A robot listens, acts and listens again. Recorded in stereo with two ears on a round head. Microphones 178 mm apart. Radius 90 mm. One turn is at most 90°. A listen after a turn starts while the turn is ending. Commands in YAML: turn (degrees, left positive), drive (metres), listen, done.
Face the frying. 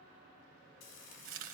turn: 70
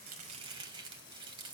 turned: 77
listen: true
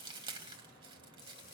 listen: true
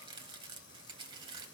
done: "I heard frying, but can't make it out now. It was about 10° right or 35° left."